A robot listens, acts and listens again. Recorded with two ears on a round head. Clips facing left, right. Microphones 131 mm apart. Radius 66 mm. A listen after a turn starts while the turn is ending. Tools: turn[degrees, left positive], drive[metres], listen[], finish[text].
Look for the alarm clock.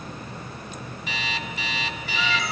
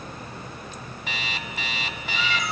Thought: The alarm clock: about 45° right or 135° right.
Action: turn[-45]
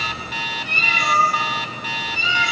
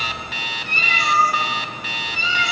Thought: So it is at 80° right.
Action: turn[-80]
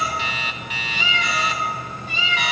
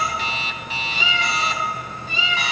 Thought: The alarm clock is now 30° right.
Action: turn[-30]
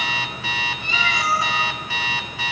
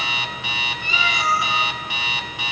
Thought: The alarm clock is now 20° right.
Action: turn[-20]
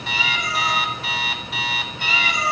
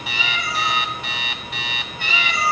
Action: finish[Found it: an alarm clock, straight ahead, under 1 m away.]